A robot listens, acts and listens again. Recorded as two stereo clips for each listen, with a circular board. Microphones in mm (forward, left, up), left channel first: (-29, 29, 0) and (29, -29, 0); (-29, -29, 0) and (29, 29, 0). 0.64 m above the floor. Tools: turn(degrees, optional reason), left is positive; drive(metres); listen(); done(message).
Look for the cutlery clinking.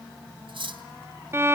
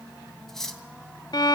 turn(degrees=-50, reason="The cutlery clinking: 50° right.")
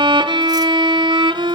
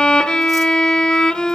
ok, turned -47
listen()
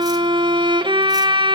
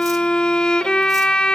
listen()
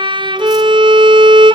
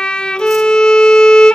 done("Facing where the cutlery clinking came from. I can't hear it now.")